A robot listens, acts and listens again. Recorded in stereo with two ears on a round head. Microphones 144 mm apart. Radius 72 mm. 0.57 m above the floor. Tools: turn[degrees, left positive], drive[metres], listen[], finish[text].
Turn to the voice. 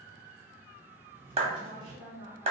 Thought: The woman speaking: about 20° right or 160° right.
Action: turn[-20]
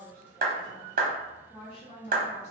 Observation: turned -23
Thought: So it is at 35° left.
Action: turn[35]
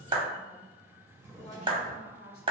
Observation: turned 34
Thought: The woman speaking is now 40° left.
Action: turn[40]
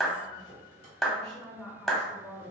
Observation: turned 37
Action: finish[Found it: a woman speaking, straight ahead.]